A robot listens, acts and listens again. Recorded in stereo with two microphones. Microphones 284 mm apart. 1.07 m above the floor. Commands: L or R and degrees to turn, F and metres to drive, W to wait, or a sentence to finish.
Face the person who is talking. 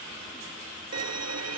W
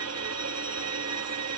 W
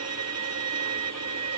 I can't make out anyone speaking, only a violin.